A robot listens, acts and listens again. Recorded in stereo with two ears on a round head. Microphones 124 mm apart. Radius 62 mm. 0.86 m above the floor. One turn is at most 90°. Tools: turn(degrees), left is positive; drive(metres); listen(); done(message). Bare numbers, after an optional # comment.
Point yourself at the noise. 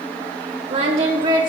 # The singing: about 35° right or 145° right.
turn(-35)
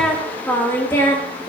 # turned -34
# So it is at 25° left.
turn(25)
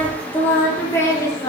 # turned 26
# The singing is now 25° left.
turn(25)
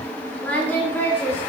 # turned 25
# The singing is now 15° left.
turn(15)
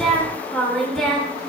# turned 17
done("Facing the singing, 2 to 4 m away.")